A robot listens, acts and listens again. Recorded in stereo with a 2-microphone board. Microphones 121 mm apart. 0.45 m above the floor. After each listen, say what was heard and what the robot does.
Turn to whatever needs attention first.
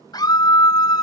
The scream: about 35° left or 145° left. Turn 35° left.
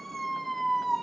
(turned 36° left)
Found it: a scream, straight ahead.